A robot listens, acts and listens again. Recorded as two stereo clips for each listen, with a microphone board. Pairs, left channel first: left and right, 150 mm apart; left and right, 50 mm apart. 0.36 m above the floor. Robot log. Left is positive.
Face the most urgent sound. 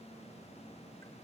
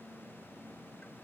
cmd idle
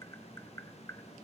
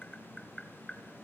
cmd idle
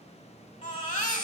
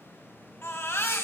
note: The baby crying: about 60° left or 120° left.
cmd yaw +60
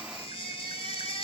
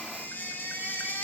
note: So it is at 45° left.
cmd yaw +45
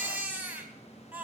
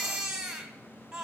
note: The baby crying is now 15° right.
cmd yaw -15
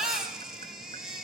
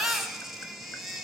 end: Found it: a baby crying, straight ahead.